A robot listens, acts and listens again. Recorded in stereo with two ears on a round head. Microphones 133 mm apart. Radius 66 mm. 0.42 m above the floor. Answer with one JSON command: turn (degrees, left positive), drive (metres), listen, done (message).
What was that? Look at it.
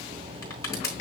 {"turn": 20}
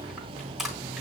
{"done": "Found it: crushing, straight ahead."}